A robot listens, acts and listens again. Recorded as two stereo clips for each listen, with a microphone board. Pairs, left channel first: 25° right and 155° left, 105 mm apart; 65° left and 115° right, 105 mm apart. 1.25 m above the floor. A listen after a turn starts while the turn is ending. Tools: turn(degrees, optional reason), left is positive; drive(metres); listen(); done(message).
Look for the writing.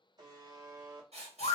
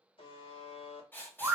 turn(degrees=140, reason="The writing: 140° left.")
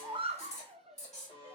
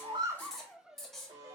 turn(degrees=-20, reason="The writing is now 20° right.")
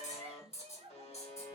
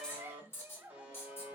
done("Found it: writing, straight ahead, 1 to 2 m away.")